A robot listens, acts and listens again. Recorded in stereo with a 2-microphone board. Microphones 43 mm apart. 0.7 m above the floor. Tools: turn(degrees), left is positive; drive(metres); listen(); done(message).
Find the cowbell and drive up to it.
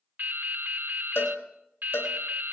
turn(degrees=65)
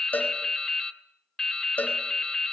turn(degrees=40)
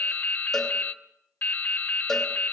listen()
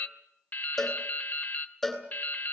drive(metres=1.0)
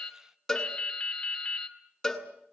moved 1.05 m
drive(metres=1.0)
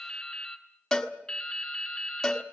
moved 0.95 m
drive(metres=1.0)
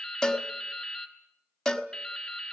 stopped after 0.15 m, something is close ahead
turn(degrees=10)
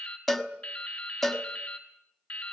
done("I am next to the cowbell.")